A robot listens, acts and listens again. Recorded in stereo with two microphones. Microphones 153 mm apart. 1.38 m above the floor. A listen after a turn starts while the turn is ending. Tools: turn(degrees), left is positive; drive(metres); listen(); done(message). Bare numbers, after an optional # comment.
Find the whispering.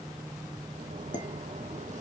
listen()
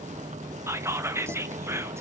# The whispering: about 15° right or 165° right.
turn(-15)
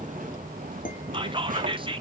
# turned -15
# So it is at 145° right.
turn(-145)
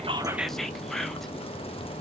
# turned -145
listen()
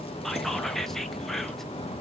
listen()
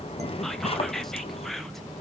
done("I heard whispering from this way, but can't make it out now.")